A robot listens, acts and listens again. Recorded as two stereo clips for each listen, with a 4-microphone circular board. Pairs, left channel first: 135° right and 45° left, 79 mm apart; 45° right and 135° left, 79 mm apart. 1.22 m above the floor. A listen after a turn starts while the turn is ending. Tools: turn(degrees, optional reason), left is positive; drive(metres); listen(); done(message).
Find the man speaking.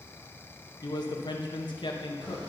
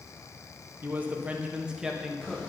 turn(degrees=-140, reason="The man speaking: 140° right.")
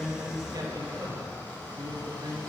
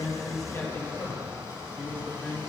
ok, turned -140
turn(degrees=20, reason="The man speaking is now 20° left.")
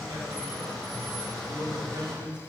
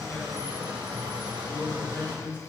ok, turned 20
turn(degrees=15, reason="The man speaking is now 15° left.")
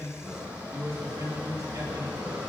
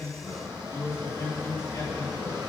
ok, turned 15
done("Facing the man speaking.")